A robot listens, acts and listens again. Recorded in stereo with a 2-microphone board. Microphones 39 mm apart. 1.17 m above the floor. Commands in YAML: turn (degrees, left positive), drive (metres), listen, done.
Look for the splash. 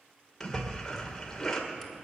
turn: 30
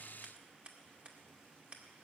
listen: true
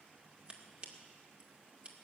done: "I heard a splash, but can't make it out now. It was about 20° right or 140° left."